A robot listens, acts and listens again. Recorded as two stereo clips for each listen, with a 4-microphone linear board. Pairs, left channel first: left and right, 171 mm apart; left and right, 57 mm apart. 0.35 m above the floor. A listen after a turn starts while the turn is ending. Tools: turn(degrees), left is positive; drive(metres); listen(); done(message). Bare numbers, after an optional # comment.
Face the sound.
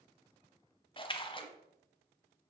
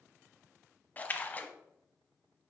# The splash: about 30° left or 150° left.
turn(30)
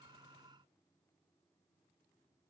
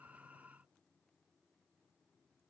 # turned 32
listen()
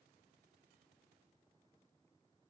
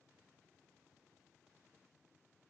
done("I heard a splash, but can't make it out now. It was about straight ahead or 120° left.")